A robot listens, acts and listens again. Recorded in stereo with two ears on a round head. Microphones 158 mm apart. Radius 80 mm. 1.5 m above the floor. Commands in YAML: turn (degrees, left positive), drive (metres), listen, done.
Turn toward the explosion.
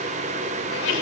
listen: true
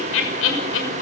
listen: true
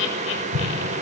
turn: -90
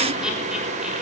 done: "Facing where the explosion came from. I can't hear it now."